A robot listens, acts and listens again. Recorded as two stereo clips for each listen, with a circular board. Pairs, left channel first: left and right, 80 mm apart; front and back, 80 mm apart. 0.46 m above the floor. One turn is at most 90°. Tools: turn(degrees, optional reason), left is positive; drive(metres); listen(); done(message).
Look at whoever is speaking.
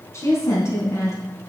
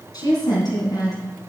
turn(degrees=35, reason="The woman speaking: 35° left.")
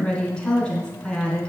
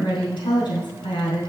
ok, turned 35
turn(degrees=10, reason="The woman speaking is now 10° left.")
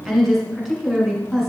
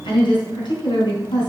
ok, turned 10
done("Facing the woman speaking.")